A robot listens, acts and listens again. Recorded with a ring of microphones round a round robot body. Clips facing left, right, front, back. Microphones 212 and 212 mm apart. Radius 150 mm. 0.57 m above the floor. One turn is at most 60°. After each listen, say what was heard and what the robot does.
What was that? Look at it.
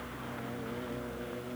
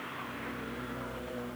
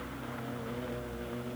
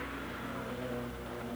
Keep listening.
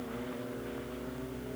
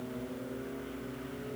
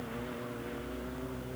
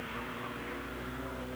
Keep listening.
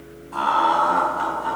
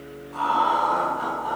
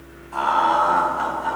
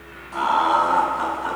The laughter: 135° left. Turn 60° left.
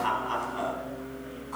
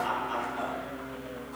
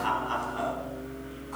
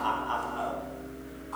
The laughter is now 70° left. Turn 60° left.
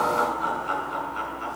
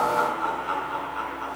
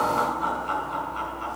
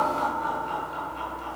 The laughter is now 25° left. Turn 25° left.
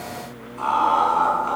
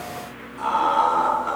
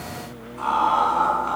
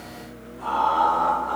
The laughter is now 15° right. Turn 15° right.
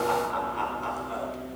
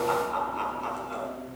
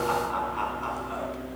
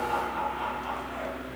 Found it: laughter, straight ahead.